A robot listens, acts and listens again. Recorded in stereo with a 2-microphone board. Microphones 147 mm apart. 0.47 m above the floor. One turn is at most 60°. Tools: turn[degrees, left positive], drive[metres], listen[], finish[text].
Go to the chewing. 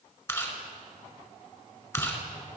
Thought: The chewing: about 20° left or 160° left.
Action: turn[20]
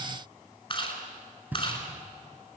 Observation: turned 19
Thought: So it is at 140° left.
Action: turn[60]
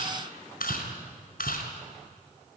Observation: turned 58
Thought: The chewing is now 85° left.
Action: turn[60]
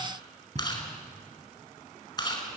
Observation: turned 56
Thought: The chewing is now 25° left.
Action: turn[25]
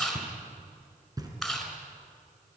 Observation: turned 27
Action: drive[1.0]
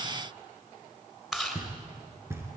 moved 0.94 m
Action: drive[1.0]
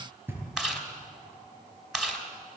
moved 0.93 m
Action: drive[1.0]
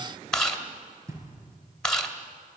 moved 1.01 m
Action: drive[1.0]
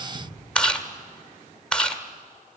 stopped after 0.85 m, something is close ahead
Thought: The chewing is now 10° left.
Action: turn[10]
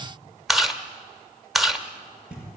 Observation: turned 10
Action: finish[I am next to the chewing.]